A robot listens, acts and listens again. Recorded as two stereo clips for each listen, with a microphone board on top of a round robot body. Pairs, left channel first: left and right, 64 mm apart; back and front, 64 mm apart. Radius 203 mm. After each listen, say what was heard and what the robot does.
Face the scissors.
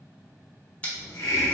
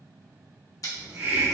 The scissors: 160° left. Turn 160° left.
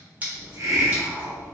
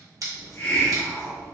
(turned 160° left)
The scissors is now 25° right. Turn 25° right.
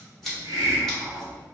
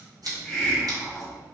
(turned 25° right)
Found it: scissors, straight ahead.